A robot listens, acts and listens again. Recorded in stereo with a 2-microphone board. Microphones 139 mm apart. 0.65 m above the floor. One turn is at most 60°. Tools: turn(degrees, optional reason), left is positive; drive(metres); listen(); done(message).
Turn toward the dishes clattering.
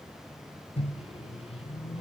listen()
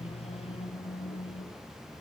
listen()
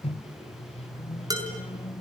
turn(degrees=-25, reason="The dishes clattering: about 25° right or 155° right.")
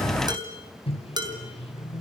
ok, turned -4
turn(degrees=-30, reason="The dishes clattering: about 30° right or 150° right.")
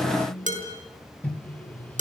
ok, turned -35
turn(degrees=-60, reason="So it is at 115° right.")
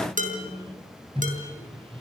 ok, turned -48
turn(degrees=-60, reason="The dishes clattering is now 70° right.")
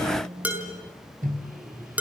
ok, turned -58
turn(degrees=-10, reason="The dishes clattering is now 10° right.")
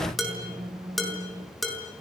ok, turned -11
done("Found it: dishes clattering, straight ahead.")